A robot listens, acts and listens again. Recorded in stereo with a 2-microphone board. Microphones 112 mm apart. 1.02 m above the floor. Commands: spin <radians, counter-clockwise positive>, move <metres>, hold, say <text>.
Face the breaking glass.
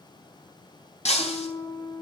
spin 1.31
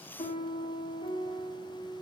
hold
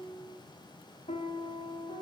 say I heard breaking glass, but can't make it out now. It was about straight ahead or 30° left.